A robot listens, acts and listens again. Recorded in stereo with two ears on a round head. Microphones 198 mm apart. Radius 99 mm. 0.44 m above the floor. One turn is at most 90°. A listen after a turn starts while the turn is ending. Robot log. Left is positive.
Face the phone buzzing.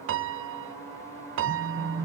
note: The phone buzzing: about 65° left or 115° left.
cmd yaw +65
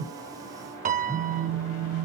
end: Facing the phone buzzing, over 4 m away.